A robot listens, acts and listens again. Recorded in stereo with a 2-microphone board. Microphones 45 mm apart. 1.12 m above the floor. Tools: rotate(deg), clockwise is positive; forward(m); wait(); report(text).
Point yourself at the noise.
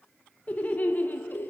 rotate(-45)
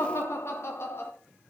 rotate(-60)
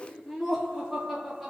report("Facing the laughter.")